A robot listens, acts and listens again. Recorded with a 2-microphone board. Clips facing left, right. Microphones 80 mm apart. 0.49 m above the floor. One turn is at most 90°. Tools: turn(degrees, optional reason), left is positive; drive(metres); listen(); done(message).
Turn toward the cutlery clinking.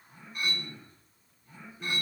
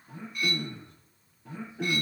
turn(degrees=35, reason="The cutlery clinking: about 35° left or 145° left.")
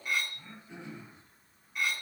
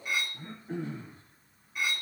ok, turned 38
done("Found it: cutlery clinking, straight ahead, 2 to 4 m away.")